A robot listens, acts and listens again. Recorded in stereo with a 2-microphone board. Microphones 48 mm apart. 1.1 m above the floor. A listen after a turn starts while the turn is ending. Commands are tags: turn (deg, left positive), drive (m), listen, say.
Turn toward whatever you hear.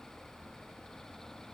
<listen/>
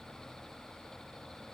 <listen/>
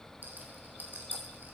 <turn deg="-40"/>
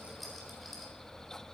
<listen/>
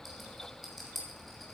<say>Found it: a rattle, straight ahead, 2 to 4 m away.</say>